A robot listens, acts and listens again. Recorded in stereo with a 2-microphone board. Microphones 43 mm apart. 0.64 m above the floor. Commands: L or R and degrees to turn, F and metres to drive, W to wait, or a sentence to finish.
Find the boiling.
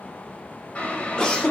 L40
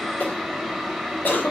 Facing the boiling.